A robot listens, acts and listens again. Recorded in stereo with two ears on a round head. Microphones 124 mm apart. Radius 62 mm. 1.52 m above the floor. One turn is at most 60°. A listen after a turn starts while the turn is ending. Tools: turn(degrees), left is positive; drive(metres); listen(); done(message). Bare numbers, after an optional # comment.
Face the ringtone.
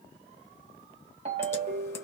# The ringtone: about 45° right or 135° right.
turn(-45)
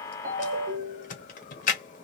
# So it is at 85° right.
turn(-60)
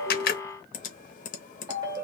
# The ringtone is now 30° right.
turn(-30)
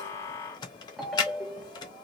done("Facing the ringtone, 1 to 2 m away.")